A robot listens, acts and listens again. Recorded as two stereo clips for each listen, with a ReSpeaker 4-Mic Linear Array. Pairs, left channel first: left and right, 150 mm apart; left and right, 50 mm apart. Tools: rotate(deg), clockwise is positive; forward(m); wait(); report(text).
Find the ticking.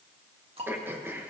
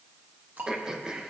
rotate(45)
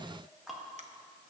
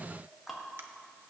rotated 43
report("Found it: ticking, straight ahead.")